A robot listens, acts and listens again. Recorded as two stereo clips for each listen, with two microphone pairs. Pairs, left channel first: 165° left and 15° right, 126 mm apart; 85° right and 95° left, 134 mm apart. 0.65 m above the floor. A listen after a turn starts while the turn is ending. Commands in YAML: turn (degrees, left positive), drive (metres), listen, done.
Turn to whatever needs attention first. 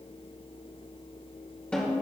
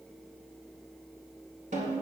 listen: true
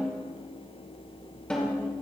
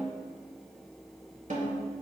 listen: true
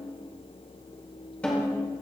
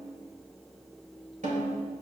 done: "I can't make out anything urgent to turn to."